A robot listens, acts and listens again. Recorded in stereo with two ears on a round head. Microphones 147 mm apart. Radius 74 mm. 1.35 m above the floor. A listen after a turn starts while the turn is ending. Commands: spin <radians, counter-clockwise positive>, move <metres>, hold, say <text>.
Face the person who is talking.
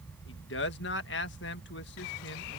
spin 1.57
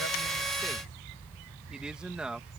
say Facing the man speaking.